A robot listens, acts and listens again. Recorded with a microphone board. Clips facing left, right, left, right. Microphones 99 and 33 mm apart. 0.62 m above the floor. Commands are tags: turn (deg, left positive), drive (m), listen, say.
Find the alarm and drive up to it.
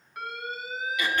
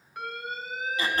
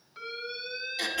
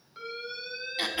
<turn deg="30"/>
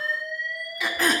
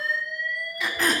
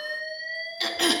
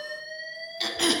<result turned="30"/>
<turn deg="140"/>
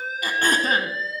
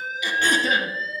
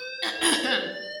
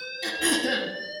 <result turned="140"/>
<turn deg="10"/>
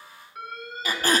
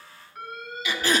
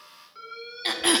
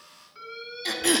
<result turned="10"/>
<drive m="1.0"/>
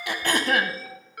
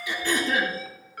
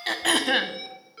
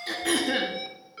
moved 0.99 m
<drive m="1.0"/>
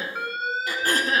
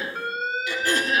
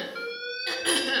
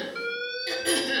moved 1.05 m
<drive m="1.0"/>
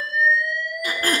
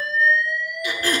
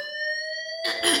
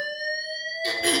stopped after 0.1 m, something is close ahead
<say>Arrived at the alarm, straight ahead.</say>